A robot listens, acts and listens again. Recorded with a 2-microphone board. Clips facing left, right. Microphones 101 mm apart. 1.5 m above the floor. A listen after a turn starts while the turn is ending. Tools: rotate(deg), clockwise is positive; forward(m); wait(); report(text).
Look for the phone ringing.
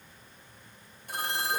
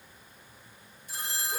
rotate(-60)
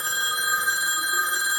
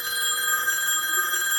rotate(-15)
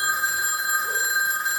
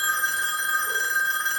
report("Found it: a phone ringing, straight ahead, under 1 m away.")